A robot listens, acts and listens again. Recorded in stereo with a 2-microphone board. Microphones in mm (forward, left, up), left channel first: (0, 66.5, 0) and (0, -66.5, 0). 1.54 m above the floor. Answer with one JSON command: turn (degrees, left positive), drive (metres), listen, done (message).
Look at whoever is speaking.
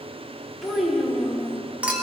{"turn": -30}
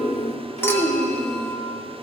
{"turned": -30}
{"turn": -110}
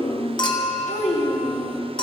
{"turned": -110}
{"turn": 55}
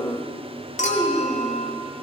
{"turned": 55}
{"turn": -10}
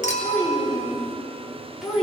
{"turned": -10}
{"done": "Found it: a child speaking, straight ahead, 2 to 4 m away."}